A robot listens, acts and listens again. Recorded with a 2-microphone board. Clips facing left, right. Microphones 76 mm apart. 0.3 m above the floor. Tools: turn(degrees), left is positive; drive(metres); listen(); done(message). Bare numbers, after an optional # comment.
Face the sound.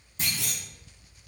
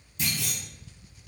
# The clunk: about 35° left or 145° left.
turn(35)
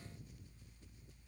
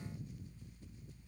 listen()
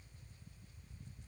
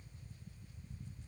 done("I heard a clunk, but can't make it out now. It was about straight ahead or 110° left.")